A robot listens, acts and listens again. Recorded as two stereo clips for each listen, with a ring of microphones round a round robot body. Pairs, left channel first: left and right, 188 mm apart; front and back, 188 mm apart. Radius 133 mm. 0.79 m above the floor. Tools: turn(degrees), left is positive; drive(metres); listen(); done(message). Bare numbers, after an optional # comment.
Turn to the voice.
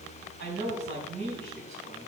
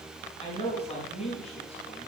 # The man speaking: 85° right.
turn(-85)
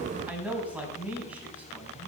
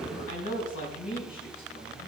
done("Facing the man speaking.")